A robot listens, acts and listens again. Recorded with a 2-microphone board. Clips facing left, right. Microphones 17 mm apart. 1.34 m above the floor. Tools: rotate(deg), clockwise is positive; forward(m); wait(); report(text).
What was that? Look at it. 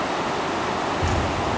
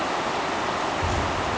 rotate(-70)
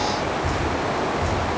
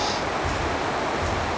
report("Facing the dripping, over 4 m away.")